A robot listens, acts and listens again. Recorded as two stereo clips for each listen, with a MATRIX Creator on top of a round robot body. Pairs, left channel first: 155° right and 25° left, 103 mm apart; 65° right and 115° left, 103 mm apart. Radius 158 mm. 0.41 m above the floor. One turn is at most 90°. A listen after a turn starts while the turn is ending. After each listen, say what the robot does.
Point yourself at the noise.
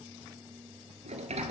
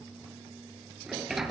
Turn 25° left.
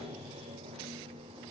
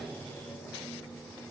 Turn 10° left.
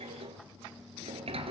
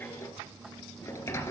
Facing the sliding door, 2 to 4 m away.